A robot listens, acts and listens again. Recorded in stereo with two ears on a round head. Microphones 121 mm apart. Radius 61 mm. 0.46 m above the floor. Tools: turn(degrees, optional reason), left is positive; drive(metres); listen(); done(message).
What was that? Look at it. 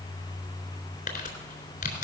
turn(degrees=65, reason="The crumpling: about 65° left or 115° left.")
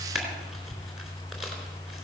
done("Found it: crumpling, straight ahead.")